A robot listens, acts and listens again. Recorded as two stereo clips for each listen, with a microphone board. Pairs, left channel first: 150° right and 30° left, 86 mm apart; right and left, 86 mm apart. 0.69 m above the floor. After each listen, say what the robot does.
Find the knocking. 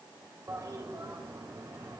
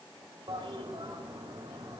Keep listening.
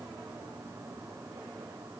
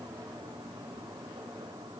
Keep listening.
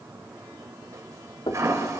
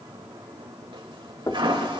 Turn 135° right.
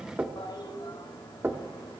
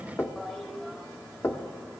Turn 35° right.
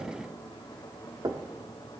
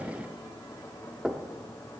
Found it: knocking, straight ahead.